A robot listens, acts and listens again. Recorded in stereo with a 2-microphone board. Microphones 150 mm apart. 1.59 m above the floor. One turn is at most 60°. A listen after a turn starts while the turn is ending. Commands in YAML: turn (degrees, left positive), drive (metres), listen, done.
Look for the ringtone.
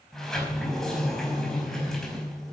listen: true
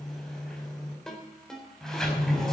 turn: 30
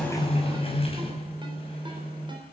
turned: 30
listen: true
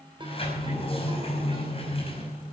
listen: true
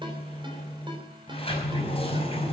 done: "I heard a ringtone, but can't make it out now. It was about 25° right or 145° left."